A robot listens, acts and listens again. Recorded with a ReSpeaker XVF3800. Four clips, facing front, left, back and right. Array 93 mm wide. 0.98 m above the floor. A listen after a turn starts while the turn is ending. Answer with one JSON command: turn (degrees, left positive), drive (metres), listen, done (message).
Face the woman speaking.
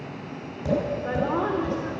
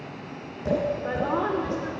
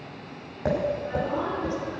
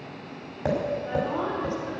{"turn": 50}
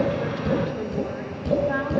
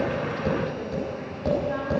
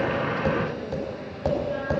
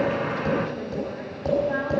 {"listen": true}
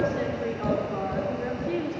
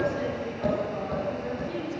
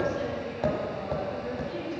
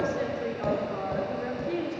{"turn": -35}
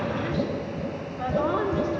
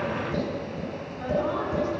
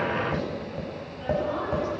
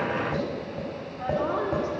{"turn": -15}
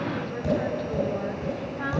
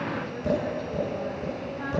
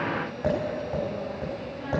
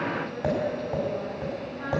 {"done": "Facing the woman speaking, 2 to 4 m away."}